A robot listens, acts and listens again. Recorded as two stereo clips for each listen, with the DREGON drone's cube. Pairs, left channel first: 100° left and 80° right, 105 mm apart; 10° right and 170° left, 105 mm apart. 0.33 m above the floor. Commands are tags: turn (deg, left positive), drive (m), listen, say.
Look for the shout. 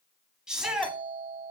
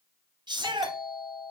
<turn deg="-160"/>
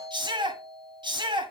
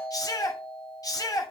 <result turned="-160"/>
<turn deg="-55"/>
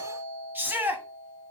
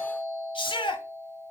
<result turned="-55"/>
<turn deg="-15"/>
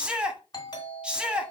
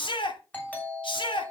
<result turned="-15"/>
<say>Found it: a shout, straight ahead, 2 to 4 m away.</say>